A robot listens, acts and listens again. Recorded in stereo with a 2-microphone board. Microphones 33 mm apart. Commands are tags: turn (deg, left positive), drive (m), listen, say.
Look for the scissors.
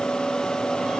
<listen/>
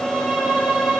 <listen/>
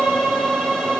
<say>I can't make out scissors, only a violin.</say>